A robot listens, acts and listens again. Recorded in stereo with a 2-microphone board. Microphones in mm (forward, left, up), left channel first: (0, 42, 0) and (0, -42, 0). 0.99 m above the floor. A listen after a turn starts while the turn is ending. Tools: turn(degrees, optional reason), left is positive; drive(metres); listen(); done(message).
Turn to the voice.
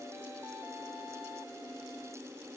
listen()
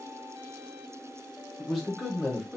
turn(degrees=30)
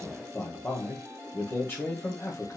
turn(degrees=150, reason="So it is at 150° left.")
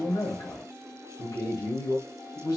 turn(degrees=50, reason="The man speaking is now 50° left.")
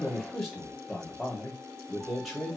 done("Facing the man speaking, 1 to 2 m away.")